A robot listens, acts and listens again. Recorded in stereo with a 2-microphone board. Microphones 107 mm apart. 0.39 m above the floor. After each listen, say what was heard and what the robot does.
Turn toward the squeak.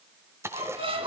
The squeak: about 60° right or 120° right. Turn 60° right.
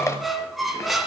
Found it: a squeak, straight ahead, 2 to 4 m away.